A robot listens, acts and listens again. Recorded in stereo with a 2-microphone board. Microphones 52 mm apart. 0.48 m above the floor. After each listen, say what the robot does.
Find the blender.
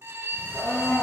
Turn 90° left.
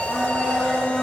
Found it: a blender, straight ahead, 2 to 4 m away.